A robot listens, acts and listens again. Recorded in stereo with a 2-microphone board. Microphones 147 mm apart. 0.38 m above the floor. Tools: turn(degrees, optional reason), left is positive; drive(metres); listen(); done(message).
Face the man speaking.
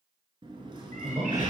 turn(degrees=-35, reason="The man speaking: about 35° right or 145° right.")
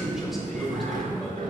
done("Found it: a man speaking, straight ahead, 1 to 2 m away.")